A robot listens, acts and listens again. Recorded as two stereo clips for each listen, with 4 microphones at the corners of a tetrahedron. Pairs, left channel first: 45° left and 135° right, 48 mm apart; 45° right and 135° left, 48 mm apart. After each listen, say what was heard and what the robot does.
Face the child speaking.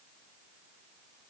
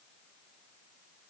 Keep listening.
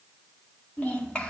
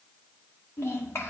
The child speaking: 20° right. Turn 20° right.
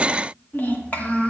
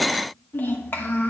The child speaking is now 10° right. Turn 10° right.
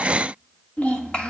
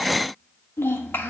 The child speaking is now 20° right. Turn 20° right.
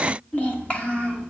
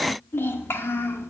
The child speaking is now 20° right. Turn 20° right.
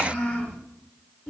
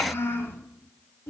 Found it: a child speaking, straight ahead.